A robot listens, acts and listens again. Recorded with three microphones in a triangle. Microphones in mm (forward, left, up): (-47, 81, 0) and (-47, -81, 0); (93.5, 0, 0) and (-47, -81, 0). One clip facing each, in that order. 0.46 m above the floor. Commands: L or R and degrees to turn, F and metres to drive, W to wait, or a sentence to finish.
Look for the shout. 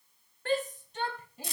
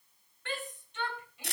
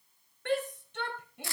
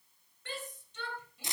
L45
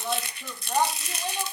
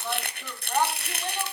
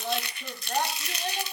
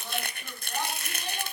L10
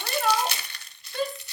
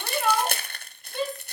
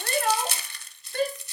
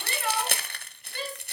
Facing the shout.